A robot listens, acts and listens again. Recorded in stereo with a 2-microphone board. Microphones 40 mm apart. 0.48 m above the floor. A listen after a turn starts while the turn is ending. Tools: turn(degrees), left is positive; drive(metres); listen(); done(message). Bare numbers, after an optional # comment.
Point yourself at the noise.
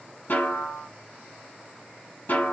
# The snare drum: about 60° left or 120° left.
turn(60)
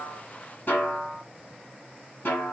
# So it is at 60° left.
turn(60)
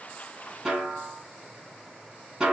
# The snare drum is now 20° right.
turn(-20)
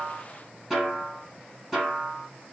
done("Found it: a snare drum, straight ahead, 1 to 2 m away.")